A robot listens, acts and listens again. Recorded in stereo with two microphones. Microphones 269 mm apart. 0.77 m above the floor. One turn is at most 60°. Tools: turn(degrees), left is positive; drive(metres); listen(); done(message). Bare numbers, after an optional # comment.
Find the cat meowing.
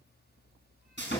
listen()
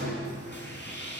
listen()
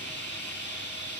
done("I can't make out a cat meowing to turn to.")